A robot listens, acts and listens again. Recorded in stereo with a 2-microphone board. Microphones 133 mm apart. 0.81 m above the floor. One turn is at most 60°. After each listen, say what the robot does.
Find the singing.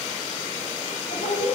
Turn 60° left.
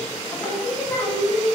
Turn 25° left.
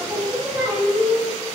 Turn 10° right.
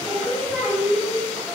Found it: singing, straight ahead.